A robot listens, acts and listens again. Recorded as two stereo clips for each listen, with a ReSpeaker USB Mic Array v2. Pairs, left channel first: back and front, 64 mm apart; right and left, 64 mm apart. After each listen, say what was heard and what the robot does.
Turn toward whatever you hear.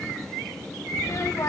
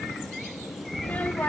The child speaking: 155° right. Turn 155° right.
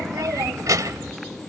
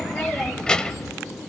The child speaking is now 15° right. Turn 15° right.
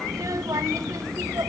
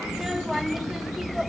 Found it: a child speaking, straight ahead, under 1 m away.